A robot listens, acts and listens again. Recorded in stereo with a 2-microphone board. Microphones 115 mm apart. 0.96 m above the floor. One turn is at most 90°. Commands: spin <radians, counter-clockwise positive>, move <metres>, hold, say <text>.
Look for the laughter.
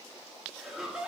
spin -0.52
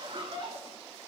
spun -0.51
spin -1.57
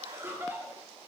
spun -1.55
spin -0.35
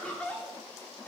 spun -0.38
spin 0.26
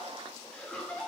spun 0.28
spin 0.17
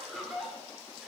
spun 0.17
say Facing the laughter, 2 to 4 m away.